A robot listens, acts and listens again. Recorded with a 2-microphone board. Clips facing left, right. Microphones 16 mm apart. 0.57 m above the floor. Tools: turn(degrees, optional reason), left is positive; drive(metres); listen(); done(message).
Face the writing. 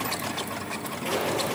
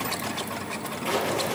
turn(degrees=30)
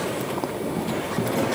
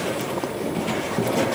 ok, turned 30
turn(degrees=-25, reason="So it is at 25° right.")
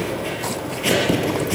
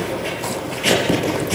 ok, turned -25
done("Found it: writing, straight ahead, over 4 m away.")